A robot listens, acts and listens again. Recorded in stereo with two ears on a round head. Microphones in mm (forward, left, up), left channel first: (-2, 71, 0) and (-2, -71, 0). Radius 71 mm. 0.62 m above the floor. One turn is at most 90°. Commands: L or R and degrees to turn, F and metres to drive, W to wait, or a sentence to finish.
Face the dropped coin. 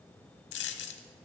L90
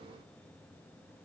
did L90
Facing where the dropped coin came from. I can't hear it now.